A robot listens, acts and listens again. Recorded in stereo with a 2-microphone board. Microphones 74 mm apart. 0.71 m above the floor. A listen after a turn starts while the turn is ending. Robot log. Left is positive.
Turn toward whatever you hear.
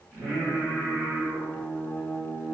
cmd yaw -30
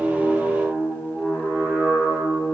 note: So it is at 145° right.
cmd yaw -145
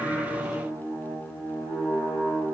end: Facing the singing, over 4 m away.